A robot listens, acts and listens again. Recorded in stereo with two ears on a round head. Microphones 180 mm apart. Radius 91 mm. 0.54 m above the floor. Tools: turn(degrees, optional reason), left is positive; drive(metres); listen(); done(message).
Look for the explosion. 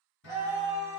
listen()
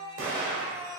turn(degrees=-65, reason="The explosion: about 65° right or 115° right.")
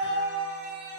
listen()
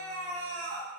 done("I heard an explosion, but can't make it out now. It was about straight ahead or 50° right.")